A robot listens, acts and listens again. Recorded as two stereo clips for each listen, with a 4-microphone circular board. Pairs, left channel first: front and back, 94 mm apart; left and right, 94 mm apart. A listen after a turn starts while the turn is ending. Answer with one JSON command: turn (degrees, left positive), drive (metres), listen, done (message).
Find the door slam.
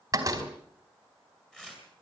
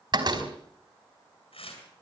{"turn": -125}
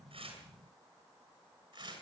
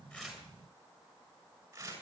{"done": "Facing where the door slam came from. I can't hear it now."}